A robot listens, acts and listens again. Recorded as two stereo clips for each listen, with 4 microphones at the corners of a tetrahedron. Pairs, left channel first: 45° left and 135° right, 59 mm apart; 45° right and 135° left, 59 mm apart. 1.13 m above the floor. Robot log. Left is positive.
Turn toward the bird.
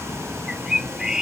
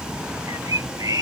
note: The bird: 145° left.
cmd yaw +145
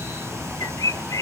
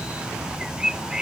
note: The bird is now 55° left.
cmd yaw +55
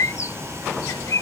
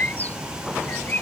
note: The bird is now 15° left.
cmd yaw +15
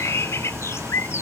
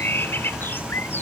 end: Found it: a bird, straight ahead.